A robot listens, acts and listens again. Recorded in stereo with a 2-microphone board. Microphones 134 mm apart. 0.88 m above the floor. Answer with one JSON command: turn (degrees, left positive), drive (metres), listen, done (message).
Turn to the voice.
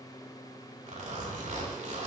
{"listen": true}
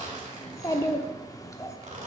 {"turn": 25}
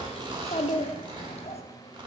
{"turn": 130}
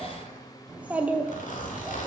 {"turn": -10}
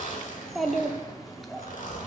{"done": "Found it: a child speaking, straight ahead, 1 to 2 m away."}